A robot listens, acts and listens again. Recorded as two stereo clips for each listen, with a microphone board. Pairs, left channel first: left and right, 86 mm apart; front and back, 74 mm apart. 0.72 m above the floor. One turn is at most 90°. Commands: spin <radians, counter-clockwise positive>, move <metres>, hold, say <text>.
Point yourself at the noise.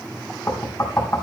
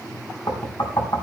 spin 0.52
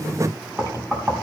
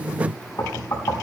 spin -0.35
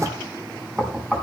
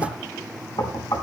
say Found it: knocking, straight ahead.